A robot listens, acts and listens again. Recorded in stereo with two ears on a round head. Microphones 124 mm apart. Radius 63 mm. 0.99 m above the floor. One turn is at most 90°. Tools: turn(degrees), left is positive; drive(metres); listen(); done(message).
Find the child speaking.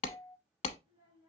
turn(degrees=-25)
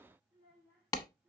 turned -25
done("Found it: a child speaking, straight ahead.")